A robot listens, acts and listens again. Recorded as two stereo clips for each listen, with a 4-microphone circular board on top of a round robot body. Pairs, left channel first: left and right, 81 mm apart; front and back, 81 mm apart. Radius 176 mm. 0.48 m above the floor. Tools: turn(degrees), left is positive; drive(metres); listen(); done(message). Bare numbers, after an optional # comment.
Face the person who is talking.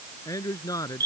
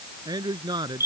# The man speaking: 140° left.
turn(140)
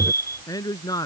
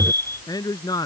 # The man speaking is now 45° left.
turn(45)
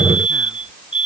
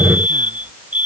listen()
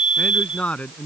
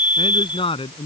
# The man speaking is now 15° left.
turn(15)
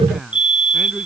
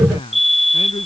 done("Found it: a man speaking, straight ahead.")